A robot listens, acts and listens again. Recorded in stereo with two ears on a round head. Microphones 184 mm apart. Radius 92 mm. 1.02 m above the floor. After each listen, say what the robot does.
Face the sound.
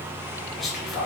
Turn 30° left.
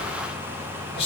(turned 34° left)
Turn 145° left.
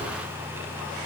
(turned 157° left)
Turn 10° right.
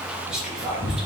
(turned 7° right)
Facing the whispering.